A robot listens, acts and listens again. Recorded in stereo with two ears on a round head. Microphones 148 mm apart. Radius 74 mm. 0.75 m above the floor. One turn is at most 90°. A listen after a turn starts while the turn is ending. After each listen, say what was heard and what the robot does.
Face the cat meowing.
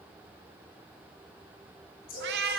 The cat meowing: about 65° right or 115° right. Turn 65° right.
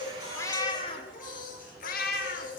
So it is at 65° left. Turn 65° left.
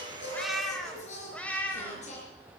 The cat meowing is now 10° left. Turn 10° left.
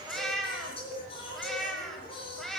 Facing the cat meowing, 2 to 4 m away.